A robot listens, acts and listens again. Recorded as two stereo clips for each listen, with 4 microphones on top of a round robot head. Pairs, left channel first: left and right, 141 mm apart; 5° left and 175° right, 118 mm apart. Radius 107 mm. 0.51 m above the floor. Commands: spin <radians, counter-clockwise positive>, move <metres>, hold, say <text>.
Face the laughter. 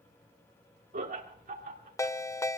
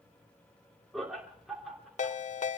spin -1.57
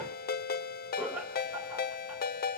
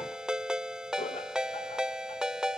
spin -0.17
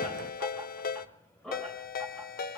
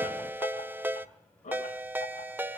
say Facing the laughter, over 4 m away.